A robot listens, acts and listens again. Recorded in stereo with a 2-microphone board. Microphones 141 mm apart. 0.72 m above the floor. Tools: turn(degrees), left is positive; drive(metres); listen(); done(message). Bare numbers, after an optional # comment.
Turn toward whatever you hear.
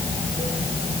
listen()
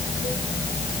listen()
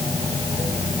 done("I can't make out anything.")